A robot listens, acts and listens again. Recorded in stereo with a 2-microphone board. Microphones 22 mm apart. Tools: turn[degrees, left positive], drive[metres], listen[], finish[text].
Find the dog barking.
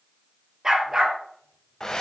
Thought: The dog barking: about 25° right or 155° right.
Action: turn[-25]
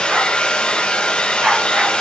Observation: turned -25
Thought: So it is at 115° right.
Action: turn[-115]
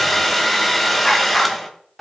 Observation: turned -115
Action: listen[]
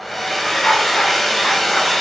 Thought: The dog barking is now 30° left.
Action: turn[30]
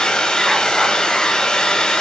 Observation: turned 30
Action: listen[]
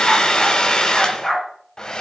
Action: finish[Found it: a dog barking, straight ahead, 2 to 4 m away.]